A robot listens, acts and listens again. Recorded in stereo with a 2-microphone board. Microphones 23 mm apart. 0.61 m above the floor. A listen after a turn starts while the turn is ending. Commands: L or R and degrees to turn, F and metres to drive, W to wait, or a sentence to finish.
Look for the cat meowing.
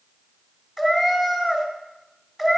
R30
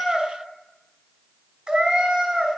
R140
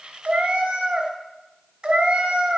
R45
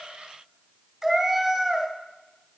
Found it: a cat meowing, straight ahead, 1 to 2 m away.